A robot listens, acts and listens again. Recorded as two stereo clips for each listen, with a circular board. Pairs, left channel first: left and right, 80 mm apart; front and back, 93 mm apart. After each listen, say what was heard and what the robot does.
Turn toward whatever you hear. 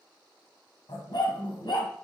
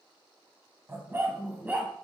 The dog barking: 105° left. Turn 105° left.
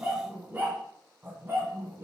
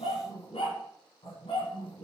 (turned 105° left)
The dog barking is now 25° right. Turn 25° right.
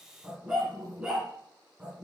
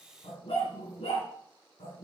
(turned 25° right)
The dog barking is now 10° right. Turn 10° right.
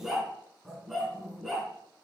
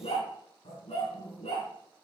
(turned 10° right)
Found it: a dog barking, straight ahead, 2 to 4 m away.